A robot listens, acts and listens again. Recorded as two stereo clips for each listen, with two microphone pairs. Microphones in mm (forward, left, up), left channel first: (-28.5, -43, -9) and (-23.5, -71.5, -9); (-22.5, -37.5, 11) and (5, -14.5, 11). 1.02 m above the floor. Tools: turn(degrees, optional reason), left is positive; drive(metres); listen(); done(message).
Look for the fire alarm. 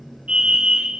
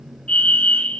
turn(degrees=-110, reason="The fire alarm: 110° right.")
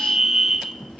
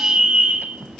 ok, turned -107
done("Facing the fire alarm, 2 to 4 m away.")